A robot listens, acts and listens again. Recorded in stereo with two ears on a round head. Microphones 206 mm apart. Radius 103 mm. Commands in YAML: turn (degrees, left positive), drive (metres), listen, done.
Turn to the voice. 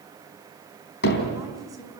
turn: -15
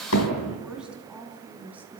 turn: -30
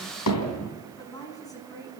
turn: 15
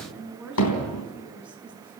done: "Found it: a woman speaking, straight ahead, over 4 m away."